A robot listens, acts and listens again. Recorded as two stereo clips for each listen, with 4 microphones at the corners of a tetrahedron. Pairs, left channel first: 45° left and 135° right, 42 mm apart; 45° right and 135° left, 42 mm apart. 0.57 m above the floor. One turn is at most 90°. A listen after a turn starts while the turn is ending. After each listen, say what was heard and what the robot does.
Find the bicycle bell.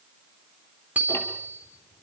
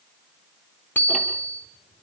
The bicycle bell: 85° right. Turn 85° right.
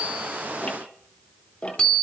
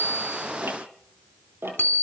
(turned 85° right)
The bicycle bell is now 20° right. Turn 20° right.
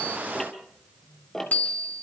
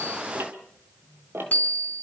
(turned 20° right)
Found it: a bicycle bell, straight ahead, 2 to 4 m away.